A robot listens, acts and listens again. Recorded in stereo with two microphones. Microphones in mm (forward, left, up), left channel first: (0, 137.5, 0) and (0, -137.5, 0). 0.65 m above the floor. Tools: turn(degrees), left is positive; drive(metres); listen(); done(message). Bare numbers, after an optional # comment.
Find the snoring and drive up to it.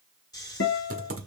turn(30)
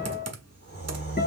# So it is at 135° left.
turn(135)
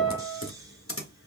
# The snoring is now 15° right.
turn(-15)
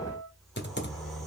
drive(1.0)
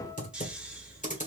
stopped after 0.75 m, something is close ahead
done("Arrived at the snoring, straight ahead.")